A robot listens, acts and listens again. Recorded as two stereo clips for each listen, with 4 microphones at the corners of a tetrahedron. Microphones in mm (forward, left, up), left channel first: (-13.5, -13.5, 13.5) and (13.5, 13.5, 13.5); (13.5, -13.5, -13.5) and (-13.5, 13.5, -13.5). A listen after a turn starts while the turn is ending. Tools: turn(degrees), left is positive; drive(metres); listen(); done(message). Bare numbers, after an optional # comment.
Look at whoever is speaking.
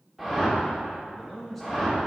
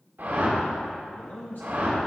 # The man speaking: 45° right.
turn(-45)
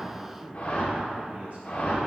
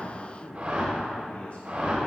done("Facing the man speaking.")